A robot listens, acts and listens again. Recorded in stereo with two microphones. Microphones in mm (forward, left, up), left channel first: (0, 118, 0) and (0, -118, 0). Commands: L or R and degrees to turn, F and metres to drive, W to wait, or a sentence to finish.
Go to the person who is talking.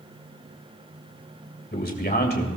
L40
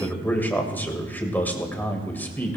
L10
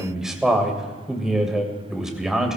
F1.0
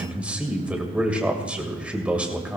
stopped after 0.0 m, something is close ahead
Something is in my way. I am facing the man speaking but have not reached it.